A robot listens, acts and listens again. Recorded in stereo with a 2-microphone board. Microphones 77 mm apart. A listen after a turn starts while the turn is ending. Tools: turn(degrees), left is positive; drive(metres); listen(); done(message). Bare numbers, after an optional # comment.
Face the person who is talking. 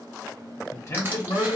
# The man speaking: about 45° left or 135° left.
turn(45)
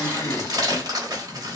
# So it is at 85° left.
turn(85)
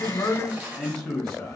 done("Found it: a man speaking, straight ahead, 1 to 2 m away.")